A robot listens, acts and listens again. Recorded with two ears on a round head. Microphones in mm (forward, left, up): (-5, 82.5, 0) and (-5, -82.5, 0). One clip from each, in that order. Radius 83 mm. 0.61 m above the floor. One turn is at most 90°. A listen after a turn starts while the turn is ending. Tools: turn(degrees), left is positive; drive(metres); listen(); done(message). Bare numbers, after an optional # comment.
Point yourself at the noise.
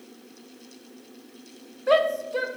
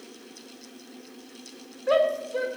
# The shout: about 20° left or 160° left.
turn(20)
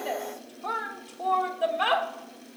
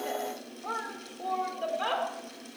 # So it is at 135° left.
turn(90)
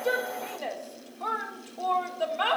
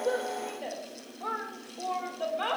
# The shout is now 30° left.
turn(30)
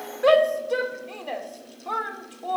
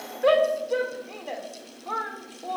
# The shout is now 15° left.
turn(15)
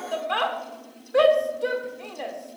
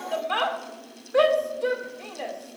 done("Found it: a shout, straight ahead.")